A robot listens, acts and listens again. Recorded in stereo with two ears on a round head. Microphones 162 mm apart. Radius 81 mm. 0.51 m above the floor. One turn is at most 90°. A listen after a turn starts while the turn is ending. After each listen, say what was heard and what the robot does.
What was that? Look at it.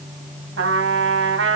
Turn 90° right.
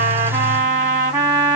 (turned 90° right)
So it is at 10° right. Turn 10° right.
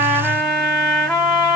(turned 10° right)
Facing the trumpet, 2 to 4 m away.